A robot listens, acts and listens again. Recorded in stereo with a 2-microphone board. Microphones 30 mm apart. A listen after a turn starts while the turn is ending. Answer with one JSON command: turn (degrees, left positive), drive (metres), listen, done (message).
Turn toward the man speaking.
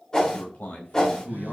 {"turn": 60}
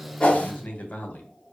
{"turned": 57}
{"turn": 65}
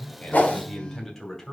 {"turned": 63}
{"turn": 10}
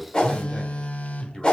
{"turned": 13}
{"listen": true}
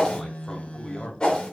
{"turn": 15}
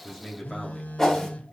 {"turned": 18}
{"done": "Facing the man speaking, 2 to 4 m away."}